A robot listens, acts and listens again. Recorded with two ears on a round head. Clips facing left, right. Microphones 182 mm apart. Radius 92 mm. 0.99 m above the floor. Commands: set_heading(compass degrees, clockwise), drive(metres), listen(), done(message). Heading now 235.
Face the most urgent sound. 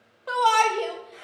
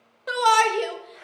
set_heading(255)
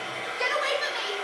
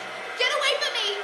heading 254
set_heading(34)
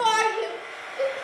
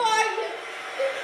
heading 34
done("Found it: a shout, straight ahead.")